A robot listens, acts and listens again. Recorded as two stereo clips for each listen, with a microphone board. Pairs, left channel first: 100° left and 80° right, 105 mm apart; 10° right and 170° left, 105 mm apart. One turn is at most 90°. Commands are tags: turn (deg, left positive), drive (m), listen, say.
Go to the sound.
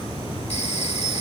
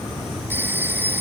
<turn deg="90"/>
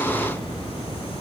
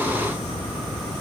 <turn deg="10"/>
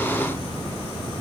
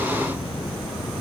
<listen/>
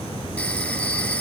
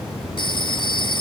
<turn deg="25"/>
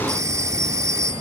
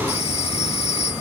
<turn deg="-20"/>
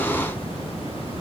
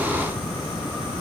<listen/>
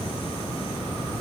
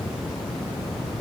<listen/>
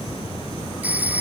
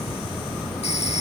<drive m="1.0"/>
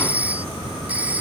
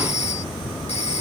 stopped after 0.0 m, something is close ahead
<say>Blocked. The phone ringing is further on, straight ahead.</say>